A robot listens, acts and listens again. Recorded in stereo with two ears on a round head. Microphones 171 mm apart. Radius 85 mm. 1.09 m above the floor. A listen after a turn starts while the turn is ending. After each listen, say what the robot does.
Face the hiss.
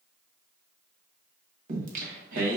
Keep listening.
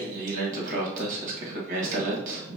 Keep listening.
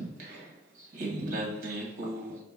I can't make out a hiss, only singing.